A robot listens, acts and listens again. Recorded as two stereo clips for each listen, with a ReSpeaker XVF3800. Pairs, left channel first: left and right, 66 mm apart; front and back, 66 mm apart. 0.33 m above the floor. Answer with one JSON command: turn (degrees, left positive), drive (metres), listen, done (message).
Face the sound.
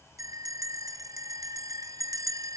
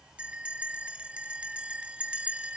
{"turn": -105}
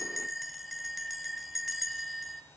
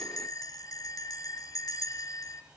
{"done": "Facing the bell."}